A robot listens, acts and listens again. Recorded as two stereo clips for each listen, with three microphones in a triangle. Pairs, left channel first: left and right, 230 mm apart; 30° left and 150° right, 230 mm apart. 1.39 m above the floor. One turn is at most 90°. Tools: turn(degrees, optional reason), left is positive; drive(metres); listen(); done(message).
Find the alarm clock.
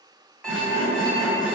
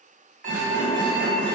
turn(degrees=90, reason="The alarm clock: 175° left.")
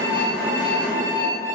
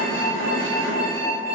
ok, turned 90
turn(degrees=90, reason="The alarm clock is now 110° left.")
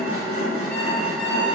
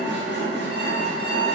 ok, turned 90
turn(degrees=20, reason="Nothing new. It was at 20° left.")
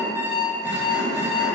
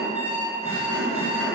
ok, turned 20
turn(degrees=-15, reason="The alarm clock is now 15° right.")
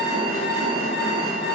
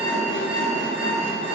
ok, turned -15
listen()
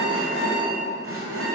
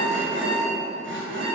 listen()
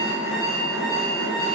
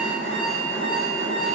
done("Found it: an alarm clock, straight ahead.")